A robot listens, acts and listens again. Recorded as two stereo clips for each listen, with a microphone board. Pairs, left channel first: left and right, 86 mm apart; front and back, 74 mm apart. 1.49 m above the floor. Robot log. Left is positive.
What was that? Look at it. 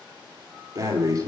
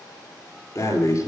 note: The breathing: 40° right.
cmd yaw -40
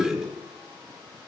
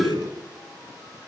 end: Found it: breathing, straight ahead, 2 to 4 m away.